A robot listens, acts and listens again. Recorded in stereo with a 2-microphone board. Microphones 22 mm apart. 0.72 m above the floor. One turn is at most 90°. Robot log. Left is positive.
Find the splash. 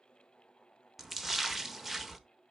cmd yaw -30
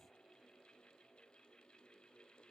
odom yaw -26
cmd idle
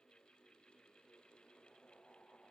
end: I heard a splash, but can't make it out now. It was about 10° left or 140° right.